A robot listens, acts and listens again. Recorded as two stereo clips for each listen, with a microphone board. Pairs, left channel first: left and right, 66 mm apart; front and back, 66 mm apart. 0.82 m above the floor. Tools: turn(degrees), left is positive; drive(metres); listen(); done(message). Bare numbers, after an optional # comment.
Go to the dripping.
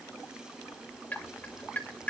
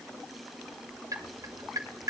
# The dripping: 155° left.
turn(155)
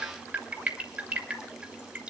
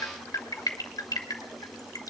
# The dripping is now 25° right.
turn(-25)
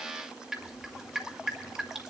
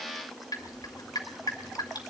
# The dripping is now 10° right.
turn(-10)
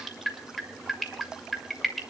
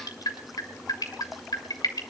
drive(1.0)
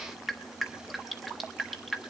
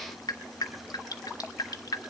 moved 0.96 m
drive(1.0)
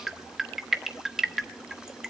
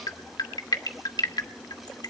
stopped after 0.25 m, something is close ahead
done("Arrived at the dripping, straight ahead.")